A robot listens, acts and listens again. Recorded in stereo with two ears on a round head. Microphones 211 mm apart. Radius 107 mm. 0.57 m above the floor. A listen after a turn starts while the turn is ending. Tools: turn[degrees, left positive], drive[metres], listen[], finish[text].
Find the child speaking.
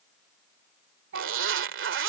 Thought: The child speaking: about 55° right or 125° right.
Action: turn[-55]
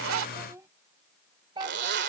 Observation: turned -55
Thought: So it is at 20° right.
Action: turn[-20]
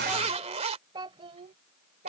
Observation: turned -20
Thought: The child speaking is now 40° right.
Action: turn[-40]
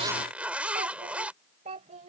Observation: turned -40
Thought: The child speaking is now 30° right.
Action: turn[-30]
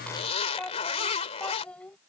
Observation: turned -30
Action: finish[Found it: a child speaking, straight ahead.]